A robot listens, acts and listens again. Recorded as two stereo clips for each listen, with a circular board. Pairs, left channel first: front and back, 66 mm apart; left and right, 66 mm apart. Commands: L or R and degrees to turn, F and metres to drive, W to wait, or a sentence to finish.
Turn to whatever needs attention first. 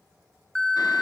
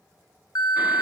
L80
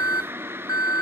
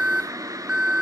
R15
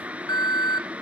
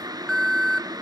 Facing the alarm.